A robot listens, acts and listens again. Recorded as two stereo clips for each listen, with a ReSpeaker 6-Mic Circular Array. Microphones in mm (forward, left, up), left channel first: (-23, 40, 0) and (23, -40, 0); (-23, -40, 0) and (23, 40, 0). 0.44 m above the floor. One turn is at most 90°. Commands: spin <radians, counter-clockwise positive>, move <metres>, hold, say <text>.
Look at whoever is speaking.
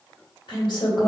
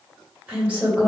spin 1.57
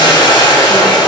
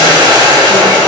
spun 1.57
spin 0.79
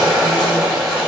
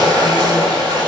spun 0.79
hold
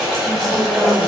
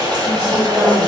say I heard a woman speaking from this way, but can't make it out now.